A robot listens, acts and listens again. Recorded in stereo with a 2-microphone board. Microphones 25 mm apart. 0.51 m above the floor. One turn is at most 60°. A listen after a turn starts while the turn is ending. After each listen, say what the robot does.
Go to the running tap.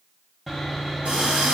Turn 60° right.
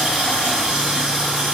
Turn 55° right.
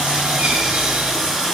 Drive 1.0 m forward.
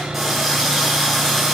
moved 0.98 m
Drive 1.0 m forward.
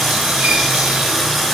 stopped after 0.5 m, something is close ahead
Arrived at the running tap, straight ahead.